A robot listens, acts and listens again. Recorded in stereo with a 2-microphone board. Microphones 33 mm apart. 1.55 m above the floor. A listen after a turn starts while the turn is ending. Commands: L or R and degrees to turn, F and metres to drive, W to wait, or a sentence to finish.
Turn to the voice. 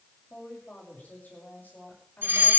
L70
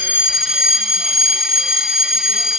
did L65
W
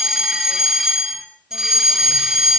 W
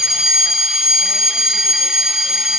I heard a woman speaking, but can't make it out now. It was about 5° left or 45° left.